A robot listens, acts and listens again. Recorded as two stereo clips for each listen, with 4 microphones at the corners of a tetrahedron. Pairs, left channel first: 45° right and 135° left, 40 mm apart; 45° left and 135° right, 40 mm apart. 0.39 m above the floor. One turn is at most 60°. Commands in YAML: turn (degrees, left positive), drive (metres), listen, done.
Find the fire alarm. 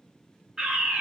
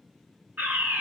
turn: -60
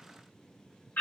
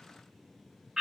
turn: -60
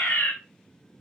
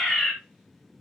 turn: -25
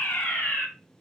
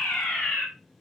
done: "Found it: a fire alarm, straight ahead."